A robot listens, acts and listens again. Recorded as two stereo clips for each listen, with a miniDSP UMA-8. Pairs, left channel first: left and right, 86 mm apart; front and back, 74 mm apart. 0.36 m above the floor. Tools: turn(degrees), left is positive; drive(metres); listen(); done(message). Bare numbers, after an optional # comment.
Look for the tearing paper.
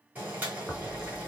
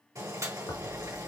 done("Found it: tearing paper, straight ahead.")